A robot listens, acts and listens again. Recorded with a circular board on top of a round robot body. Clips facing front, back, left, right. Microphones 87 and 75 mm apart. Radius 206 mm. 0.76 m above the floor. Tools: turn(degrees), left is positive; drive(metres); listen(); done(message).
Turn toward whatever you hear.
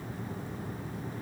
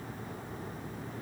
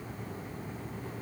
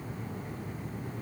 listen()
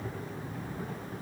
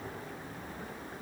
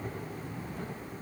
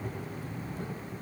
listen()
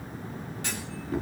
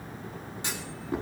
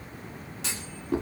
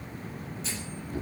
turn(degrees=110)
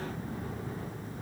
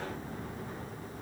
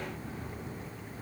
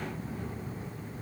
done("Facing where the clunk came from. I can't hear it now.")